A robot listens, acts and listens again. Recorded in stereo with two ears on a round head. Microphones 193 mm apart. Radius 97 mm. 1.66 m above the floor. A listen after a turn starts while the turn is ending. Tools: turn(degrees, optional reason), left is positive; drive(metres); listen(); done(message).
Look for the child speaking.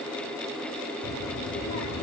turn(degrees=70, reason="The child speaking: about 70° left or 110° left.")
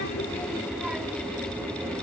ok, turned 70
turn(degrees=-10, reason="So it is at 10° right.")
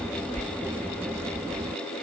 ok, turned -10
turn(degrees=-15, reason="The child speaking is now 15° right.")
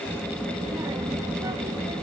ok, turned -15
turn(degrees=-20, reason="The child speaking is now 20° right.")
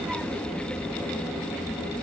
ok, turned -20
done("Facing the child speaking.")